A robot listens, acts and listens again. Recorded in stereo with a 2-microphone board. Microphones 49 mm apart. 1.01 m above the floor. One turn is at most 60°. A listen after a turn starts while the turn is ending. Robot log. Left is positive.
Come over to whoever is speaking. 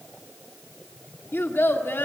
note: The child speaking: about 60° left or 120° left.
cmd yaw +60
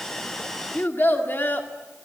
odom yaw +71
note: So it is at 50° left.
cmd yaw +50
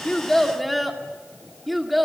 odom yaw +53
cmd fwd 1.0
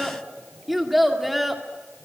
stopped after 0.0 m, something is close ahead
end: Blocked. The child speaking is further on, straight ahead.